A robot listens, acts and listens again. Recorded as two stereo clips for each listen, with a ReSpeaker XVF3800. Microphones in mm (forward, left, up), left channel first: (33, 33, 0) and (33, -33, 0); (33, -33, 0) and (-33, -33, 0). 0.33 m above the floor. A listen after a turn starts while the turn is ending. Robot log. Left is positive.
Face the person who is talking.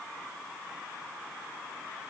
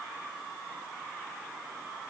cmd idle
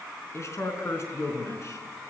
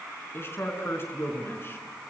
note: The man speaking: 50° left.
cmd yaw +50
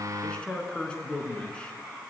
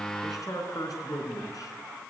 note: The man speaking is now 15° left.
cmd yaw +15
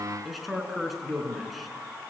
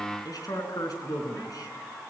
end: Facing the man speaking.